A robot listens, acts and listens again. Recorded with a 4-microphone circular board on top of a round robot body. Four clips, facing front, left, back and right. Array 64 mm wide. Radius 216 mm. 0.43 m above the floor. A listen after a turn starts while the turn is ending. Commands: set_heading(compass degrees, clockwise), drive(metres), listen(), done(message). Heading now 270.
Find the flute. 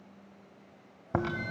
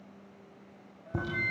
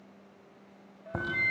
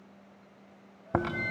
set_heading(95)
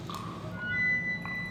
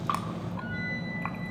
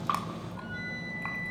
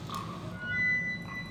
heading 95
set_heading(120)
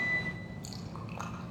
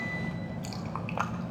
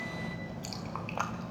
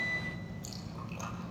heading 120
listen()
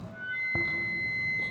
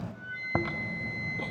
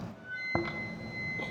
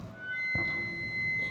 set_heading(130)
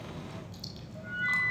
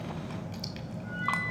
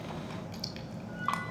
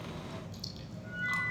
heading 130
done("Found it: a flute, straight ahead, 2 to 4 m away.")